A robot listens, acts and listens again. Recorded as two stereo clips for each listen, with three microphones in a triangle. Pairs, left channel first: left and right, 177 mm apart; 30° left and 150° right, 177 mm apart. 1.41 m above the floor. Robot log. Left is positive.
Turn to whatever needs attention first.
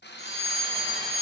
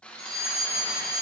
note: The fire alarm: 35° right.
cmd yaw -35
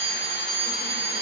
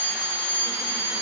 note: The fire alarm is now 30° right.
cmd yaw -30
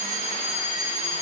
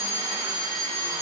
note: The fire alarm is now 10° right.
cmd yaw -10
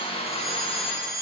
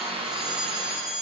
end: Found it: a fire alarm, straight ahead.